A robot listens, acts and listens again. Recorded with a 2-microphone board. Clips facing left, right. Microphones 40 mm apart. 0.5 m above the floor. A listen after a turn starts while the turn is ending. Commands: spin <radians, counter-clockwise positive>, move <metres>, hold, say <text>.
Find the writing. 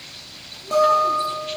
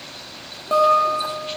hold
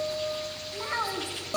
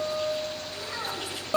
hold
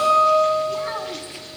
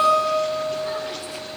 say I can't make out writing, only a child speaking and a guitar.